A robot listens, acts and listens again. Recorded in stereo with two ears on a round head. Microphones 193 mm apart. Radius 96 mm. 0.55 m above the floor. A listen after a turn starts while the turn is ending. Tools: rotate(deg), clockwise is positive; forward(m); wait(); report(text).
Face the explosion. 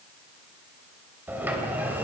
wait()
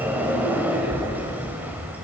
wait()
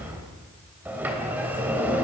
report("I can't make out an explosion to turn to.")